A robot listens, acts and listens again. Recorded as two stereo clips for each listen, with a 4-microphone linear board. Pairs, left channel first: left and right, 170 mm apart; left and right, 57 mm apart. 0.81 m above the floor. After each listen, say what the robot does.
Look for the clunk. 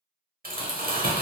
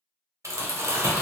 Keep listening.
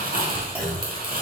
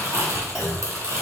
Turn 30° right.
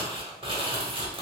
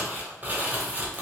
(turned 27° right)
Keep listening.
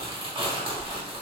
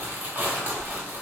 I heard a clunk, but can't make it out now. It was about 15° left or 145° right.